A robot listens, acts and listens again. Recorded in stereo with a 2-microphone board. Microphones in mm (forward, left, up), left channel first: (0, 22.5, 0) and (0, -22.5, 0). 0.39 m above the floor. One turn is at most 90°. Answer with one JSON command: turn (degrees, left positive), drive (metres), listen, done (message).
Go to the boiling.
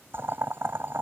{"turn": -55}
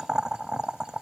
{"turn": -15}
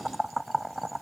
{"drive": 1.0}
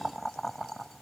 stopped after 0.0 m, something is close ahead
{"done": "Blocked. The boiling is further on, straight ahead."}